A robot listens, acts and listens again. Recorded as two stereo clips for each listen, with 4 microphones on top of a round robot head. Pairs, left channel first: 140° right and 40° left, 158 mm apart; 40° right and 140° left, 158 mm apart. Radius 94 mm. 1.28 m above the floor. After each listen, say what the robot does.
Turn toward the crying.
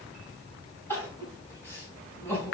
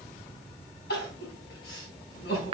Turn 65° right.
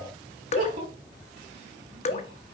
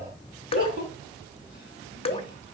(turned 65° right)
Found it: crying, straight ahead, 2 to 4 m away.